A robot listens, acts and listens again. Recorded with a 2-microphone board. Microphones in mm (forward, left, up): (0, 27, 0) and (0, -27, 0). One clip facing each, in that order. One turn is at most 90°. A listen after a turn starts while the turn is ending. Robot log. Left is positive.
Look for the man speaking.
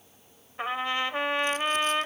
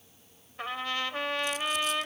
cmd idle
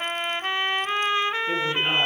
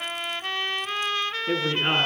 note: The man speaking: about 30° right or 150° right.
cmd yaw -30
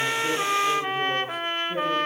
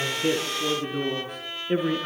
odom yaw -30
note: So it is at 120° right.
cmd yaw -90
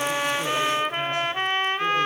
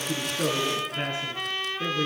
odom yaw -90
note: Nothing new. It was at 30° right.
cmd yaw -30
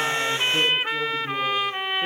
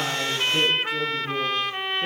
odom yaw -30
note: The man speaking is now 10° left.
cmd yaw +10
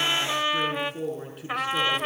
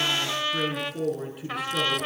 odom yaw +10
end: Found it: a man speaking, straight ahead.